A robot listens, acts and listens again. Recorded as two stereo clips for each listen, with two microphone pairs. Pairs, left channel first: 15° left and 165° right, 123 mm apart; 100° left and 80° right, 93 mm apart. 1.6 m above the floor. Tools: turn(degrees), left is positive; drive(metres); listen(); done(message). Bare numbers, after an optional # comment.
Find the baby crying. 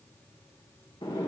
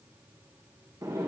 listen()
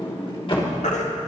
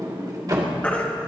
# The baby crying: 25° left.
turn(25)
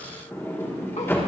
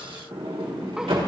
listen()
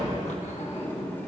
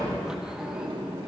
listen()
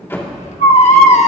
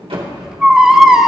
done("Facing the baby crying, 1 to 2 m away.")